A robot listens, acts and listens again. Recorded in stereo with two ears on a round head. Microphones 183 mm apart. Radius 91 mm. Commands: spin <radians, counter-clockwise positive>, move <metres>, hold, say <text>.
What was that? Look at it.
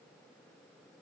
hold
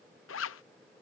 spin 1.31
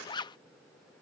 spin 0.44
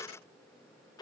spin 0.35
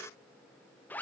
spin 0.17
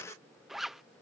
say Facing the zipper.